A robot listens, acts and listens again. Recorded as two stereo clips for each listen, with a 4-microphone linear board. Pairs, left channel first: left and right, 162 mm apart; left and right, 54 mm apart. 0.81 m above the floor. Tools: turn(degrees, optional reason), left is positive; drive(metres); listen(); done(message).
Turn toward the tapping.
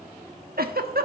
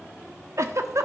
listen()
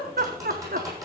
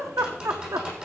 turn(degrees=-20, reason="The tapping: about 20° right or 160° right.")
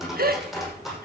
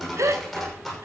done("Facing the tapping, over 4 m away.")